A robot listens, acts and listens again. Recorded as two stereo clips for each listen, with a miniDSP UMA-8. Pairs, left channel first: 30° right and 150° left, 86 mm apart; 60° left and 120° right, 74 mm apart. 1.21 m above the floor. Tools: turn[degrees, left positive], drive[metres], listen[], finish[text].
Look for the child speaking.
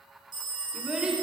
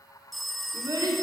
Thought: The child speaking: 130° right.
Action: turn[-130]
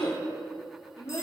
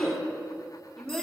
Thought: The child speaking is now 25° right.
Action: turn[-25]
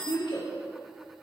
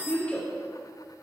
Thought: The child speaking is now 10° right.
Action: turn[-10]
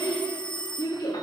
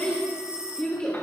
Thought: The child speaking is now 15° right.
Action: turn[-15]
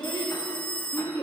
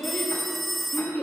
Action: finish[Found it: a child speaking, straight ahead.]